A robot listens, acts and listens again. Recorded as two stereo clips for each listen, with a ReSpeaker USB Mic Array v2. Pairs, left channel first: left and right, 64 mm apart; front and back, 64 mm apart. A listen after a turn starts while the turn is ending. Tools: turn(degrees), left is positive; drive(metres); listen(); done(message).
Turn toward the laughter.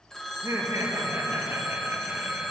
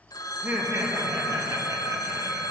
turn(degrees=-145)
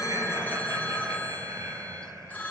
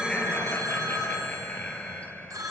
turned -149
turn(degrees=-70)
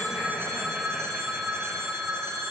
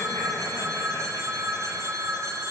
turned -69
listen()
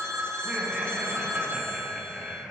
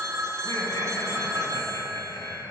turn(degrees=-15)
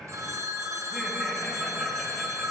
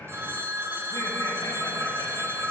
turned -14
listen()
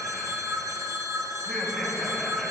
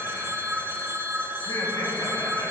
done("Facing the laughter, 2 to 4 m away.")